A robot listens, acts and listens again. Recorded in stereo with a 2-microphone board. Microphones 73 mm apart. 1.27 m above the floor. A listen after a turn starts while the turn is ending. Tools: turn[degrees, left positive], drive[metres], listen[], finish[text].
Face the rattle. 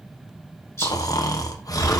Thought: The rattle: about 40° left or 140° left.
Action: turn[40]
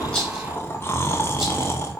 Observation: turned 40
Action: listen[]
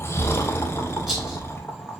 Action: listen[]
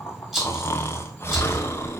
Action: finish[Facing the rattle.]